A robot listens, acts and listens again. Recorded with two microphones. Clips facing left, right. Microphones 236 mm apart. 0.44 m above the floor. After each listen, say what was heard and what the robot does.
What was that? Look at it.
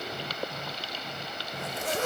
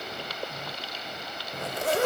The zipper: about 65° right or 115° right. Turn 65° right.
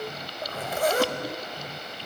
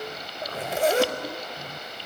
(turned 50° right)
So it is at 30° right. Turn 30° right.
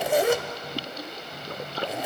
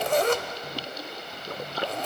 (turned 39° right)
The zipper is now 10° left. Turn 10° left.
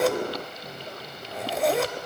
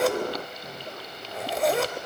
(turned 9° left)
Found it: a zipper, straight ahead.